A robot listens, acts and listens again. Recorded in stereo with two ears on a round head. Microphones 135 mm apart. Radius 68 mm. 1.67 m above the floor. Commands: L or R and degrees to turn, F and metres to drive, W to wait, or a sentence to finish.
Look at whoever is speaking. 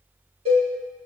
W
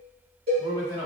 L20
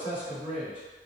L140
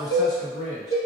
Facing the man speaking, 1 to 2 m away.